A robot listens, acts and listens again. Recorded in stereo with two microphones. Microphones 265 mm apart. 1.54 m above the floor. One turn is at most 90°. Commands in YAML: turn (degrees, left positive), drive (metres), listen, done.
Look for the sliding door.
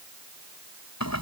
listen: true
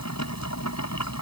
listen: true
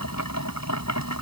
done: "I can't make out a sliding door, only boiling."